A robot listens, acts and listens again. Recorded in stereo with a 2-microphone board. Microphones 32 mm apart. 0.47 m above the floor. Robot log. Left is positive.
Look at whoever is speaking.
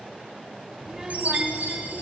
note: The child speaking: about 15° right or 165° right.
cmd yaw -15
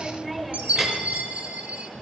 end: Found it: a child speaking, straight ahead, 1 to 2 m away.